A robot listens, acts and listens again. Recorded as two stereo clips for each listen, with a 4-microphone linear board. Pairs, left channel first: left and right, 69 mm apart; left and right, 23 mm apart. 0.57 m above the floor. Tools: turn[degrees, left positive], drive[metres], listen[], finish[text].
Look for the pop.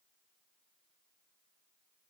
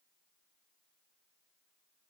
Action: listen[]
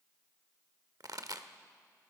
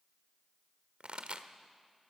Thought: The pop: about 65° right or 115° right.
Action: turn[-65]
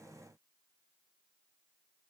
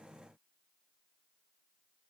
Action: listen[]
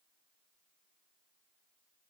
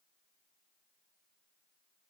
Action: finish[I heard a pop, but can't make it out now. It was about straight ahead or 50° right.]